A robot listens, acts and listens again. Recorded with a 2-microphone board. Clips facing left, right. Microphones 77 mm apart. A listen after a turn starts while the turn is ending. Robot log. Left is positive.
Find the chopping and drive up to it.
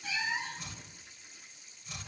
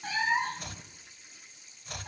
note: The chopping: about 60° right or 120° right.
cmd yaw -60
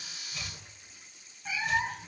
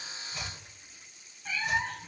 cmd idle
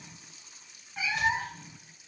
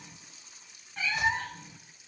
cmd idle
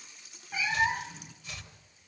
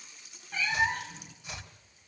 note: So it is at 25° right.
cmd yaw -25
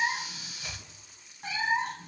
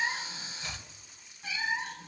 note: The chopping is now 10° left.
cmd yaw +10
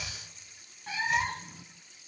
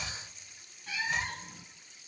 cmd idle
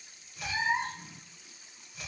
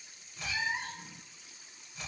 cmd fwd 1.0
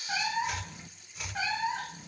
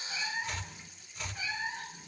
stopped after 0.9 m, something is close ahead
note: The chopping is now 10° left.
cmd yaw +10
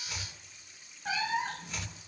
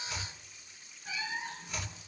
end: I am next to the chopping.